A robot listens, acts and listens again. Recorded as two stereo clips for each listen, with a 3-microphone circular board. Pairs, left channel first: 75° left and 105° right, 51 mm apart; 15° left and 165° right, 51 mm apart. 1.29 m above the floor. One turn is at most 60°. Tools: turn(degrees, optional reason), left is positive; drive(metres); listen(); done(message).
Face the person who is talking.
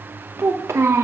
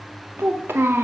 turn(degrees=-60, reason="The child speaking: 125° right.")
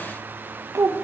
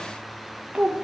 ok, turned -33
turn(degrees=-60, reason="The child speaking is now 95° right.")
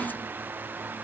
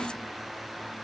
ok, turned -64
turn(degrees=-30, reason="Nothing new. It was at 30° right.")
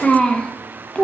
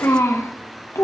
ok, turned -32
done("Facing the child speaking.")